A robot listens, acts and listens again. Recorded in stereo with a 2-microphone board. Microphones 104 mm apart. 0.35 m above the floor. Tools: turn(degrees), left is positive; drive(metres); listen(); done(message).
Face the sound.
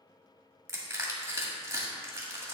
turn(degrees=-30)
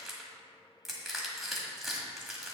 done("Facing the crushing.")